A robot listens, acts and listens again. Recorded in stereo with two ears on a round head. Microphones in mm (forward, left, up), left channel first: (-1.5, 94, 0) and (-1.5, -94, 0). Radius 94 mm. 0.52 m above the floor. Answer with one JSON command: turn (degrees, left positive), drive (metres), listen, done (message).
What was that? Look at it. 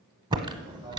{"turn": -25}
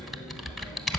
{"done": "Found it: typing on a keyboard, straight ahead, under 1 m away."}